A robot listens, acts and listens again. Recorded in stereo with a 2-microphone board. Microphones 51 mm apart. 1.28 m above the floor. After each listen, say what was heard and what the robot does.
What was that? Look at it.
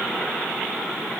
Keep listening.
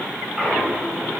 Turn 30° right.
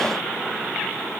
Keep listening.
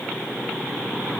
I heard a clunk, but can't make it out now. It was about 15° left or 135° right.